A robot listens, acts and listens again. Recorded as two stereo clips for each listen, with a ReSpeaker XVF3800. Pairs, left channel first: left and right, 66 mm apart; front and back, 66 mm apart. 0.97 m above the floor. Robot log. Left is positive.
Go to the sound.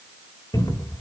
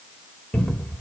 note: The cupboard door: 70° left.
cmd yaw +70
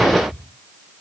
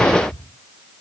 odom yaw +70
cmd fwd 1.0
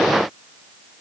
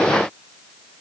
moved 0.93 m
cmd idle
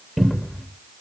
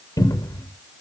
cmd fwd 1.0
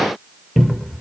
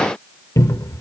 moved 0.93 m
cmd fwd 1.0
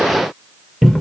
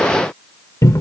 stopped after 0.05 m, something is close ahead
end: Arrived at the cupboard door, straight ahead.